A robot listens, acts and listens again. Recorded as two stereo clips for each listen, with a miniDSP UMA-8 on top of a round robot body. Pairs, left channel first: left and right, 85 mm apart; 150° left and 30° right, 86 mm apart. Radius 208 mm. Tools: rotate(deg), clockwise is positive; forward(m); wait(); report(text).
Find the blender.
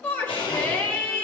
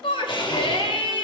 rotate(-115)
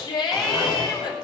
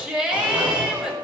wait()
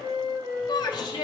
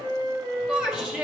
wait()
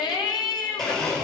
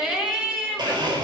report("Facing the blender.")